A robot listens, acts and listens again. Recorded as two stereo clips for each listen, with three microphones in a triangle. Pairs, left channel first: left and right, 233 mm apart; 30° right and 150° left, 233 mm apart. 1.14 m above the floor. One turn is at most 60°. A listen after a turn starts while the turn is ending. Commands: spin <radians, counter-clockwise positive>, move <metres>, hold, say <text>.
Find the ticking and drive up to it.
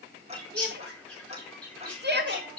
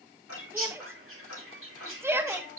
spin -0.52
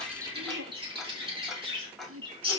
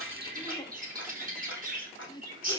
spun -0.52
move 1.0
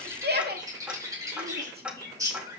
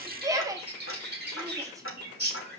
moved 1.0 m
move 1.0
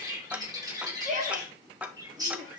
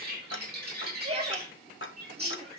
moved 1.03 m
move 1.0
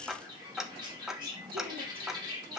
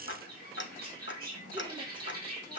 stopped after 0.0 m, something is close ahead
say I am next to the ticking.